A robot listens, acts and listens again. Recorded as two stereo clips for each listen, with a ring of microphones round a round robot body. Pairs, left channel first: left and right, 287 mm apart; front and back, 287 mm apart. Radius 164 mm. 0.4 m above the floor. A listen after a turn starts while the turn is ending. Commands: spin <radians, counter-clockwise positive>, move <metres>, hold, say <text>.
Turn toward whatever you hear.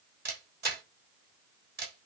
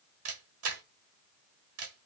spin -2.53
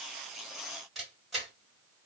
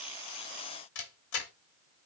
say Found it: a camera shutter, straight ahead.